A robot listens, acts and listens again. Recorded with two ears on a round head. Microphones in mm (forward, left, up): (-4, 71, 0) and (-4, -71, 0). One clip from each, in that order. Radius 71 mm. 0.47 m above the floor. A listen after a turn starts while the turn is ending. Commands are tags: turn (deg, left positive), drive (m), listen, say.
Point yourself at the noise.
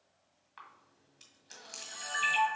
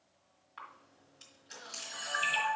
<turn deg="15"/>
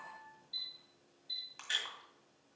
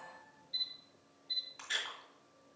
<turn deg="150"/>
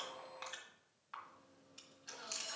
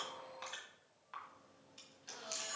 <say>Facing the camera shutter, 1 to 2 m away.</say>